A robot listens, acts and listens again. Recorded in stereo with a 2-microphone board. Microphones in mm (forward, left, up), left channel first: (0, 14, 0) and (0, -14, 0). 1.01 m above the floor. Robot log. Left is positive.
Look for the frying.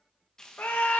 note: The frying: about 20° left or 160° left.
cmd yaw +20
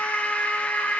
cmd idle
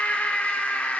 cmd idle
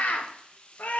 note: So it is at 135° left.
cmd yaw +135
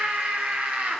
cmd idle
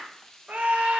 note: The frying is now 20° left.
cmd yaw +20
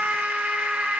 cmd idle
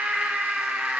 cmd idle
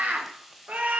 end: Facing the frying, under 1 m away.